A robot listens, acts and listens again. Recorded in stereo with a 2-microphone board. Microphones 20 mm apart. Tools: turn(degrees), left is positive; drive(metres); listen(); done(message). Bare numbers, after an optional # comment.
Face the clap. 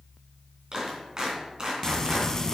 # The clap: about 40° right or 140° right.
turn(-40)
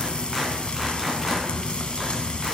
listen()
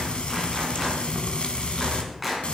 done("Found it: a clap, straight ahead, 2 to 4 m away.")